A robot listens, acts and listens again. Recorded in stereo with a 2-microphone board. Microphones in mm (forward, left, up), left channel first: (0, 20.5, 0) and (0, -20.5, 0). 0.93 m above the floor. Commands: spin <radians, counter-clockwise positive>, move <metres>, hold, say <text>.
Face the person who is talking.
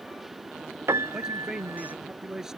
spin -0.52
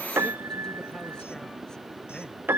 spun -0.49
hold
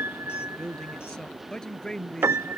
spin 0.26
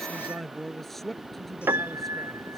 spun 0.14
say Found it: a man speaking, straight ahead.